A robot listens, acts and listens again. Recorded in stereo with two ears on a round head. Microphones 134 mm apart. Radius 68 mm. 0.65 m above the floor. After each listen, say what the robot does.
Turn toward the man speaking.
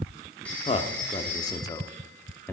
Turn 30° left.
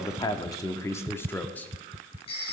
Turn 30° left.
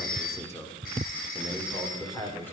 Turn 30° left.
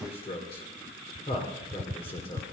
Turn 140° left.
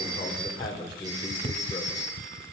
Turn 30° left.
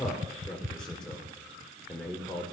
Facing the man speaking, 2 to 4 m away.